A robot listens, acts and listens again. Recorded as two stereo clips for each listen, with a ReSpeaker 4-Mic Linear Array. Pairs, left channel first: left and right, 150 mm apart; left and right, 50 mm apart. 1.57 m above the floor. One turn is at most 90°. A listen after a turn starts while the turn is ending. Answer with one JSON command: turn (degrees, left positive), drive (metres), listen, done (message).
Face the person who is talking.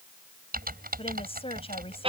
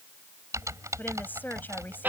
{"turn": 40}
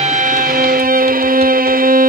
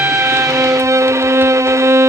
{"listen": true}
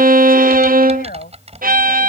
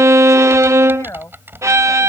{"turn": 90}
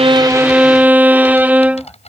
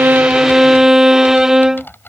{"turn": 10}
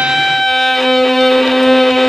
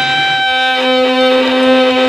{"listen": true}
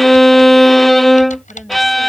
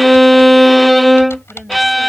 {"done": "I heard a woman speaking from this way, but can't make it out now."}